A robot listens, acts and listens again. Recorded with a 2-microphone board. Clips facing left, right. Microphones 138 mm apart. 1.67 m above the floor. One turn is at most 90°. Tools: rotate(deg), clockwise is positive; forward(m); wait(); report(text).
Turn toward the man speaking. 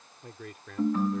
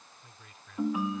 rotate(-65)
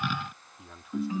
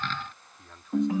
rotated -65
report("Facing the man speaking.")